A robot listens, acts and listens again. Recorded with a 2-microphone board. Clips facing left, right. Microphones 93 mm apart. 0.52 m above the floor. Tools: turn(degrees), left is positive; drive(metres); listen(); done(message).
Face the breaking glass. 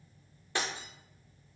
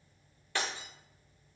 turn(degrees=20)
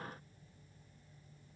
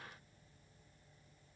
listen()
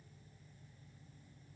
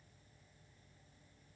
done("I heard breaking glass, but can't make it out now. It was about straight ahead or 140° left.")